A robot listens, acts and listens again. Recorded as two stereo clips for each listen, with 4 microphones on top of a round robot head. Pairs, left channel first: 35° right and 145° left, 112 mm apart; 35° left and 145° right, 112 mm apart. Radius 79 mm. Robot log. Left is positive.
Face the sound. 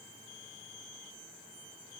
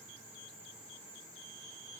cmd idle
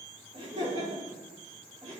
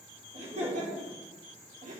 note: The laughter: 155° right.
cmd yaw -155
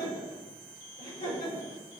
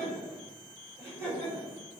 note: The laughter is now 40° right.
cmd yaw -40
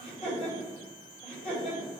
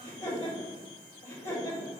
end: Facing the laughter, over 4 m away.